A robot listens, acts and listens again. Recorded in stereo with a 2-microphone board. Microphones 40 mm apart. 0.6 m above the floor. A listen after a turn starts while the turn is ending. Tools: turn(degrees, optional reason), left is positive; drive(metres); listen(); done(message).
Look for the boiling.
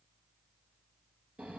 listen()
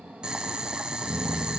turn(degrees=-20, reason="The boiling: about 20° right or 160° right.")
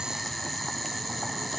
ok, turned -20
done("Found it: boiling, straight ahead, 1 to 2 m away.")